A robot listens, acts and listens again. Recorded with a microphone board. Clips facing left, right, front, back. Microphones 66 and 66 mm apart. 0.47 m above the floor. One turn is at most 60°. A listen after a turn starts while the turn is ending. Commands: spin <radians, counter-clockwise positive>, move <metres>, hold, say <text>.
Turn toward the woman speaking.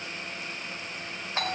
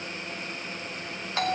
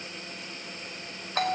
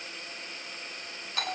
hold
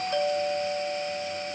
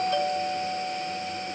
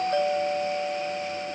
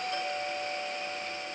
hold
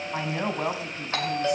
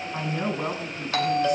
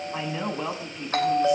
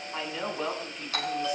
spin 1.05
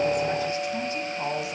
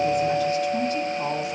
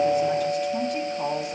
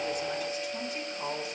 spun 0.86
spin 0.35
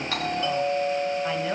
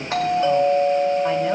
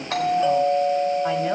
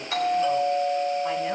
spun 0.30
hold
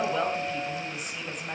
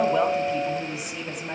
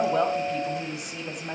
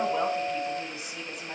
spin -0.17
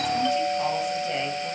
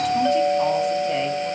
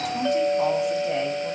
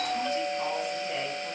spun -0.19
hold
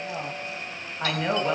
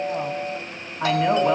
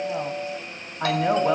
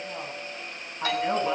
say Found it: a woman speaking, straight ahead, 2 to 4 m away.